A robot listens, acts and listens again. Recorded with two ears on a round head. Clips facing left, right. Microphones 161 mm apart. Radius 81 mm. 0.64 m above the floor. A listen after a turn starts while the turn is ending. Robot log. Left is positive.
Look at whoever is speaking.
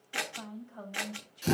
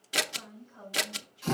note: The woman speaking: about 55° left or 125° left.
cmd yaw +55
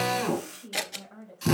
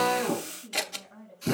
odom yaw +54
note: So it is at 65° left.
cmd yaw +65
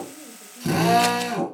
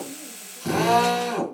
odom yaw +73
note: Nothing new. It was at 10° right.
cmd yaw -10
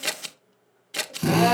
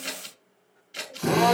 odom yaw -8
cmd idle
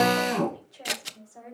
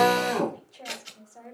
end: Found it: a woman speaking, straight ahead.